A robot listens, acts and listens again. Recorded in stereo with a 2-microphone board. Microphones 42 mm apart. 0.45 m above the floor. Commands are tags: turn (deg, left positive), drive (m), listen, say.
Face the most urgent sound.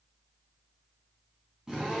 <listen/>
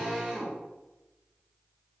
<listen/>
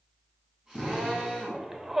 <turn deg="-30"/>
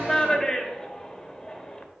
<turn deg="20"/>
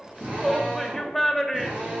<say>Found it: a shout, straight ahead.</say>